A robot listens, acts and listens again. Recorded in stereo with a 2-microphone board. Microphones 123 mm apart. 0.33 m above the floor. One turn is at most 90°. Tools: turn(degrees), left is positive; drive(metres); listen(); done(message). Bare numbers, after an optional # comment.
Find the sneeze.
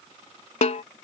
listen()
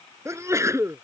# The sneeze: about 25° right or 155° right.
turn(-25)
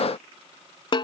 listen()
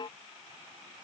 done("I heard a sneeze, but can't make it out now. It was about straight ahead or 130° right.")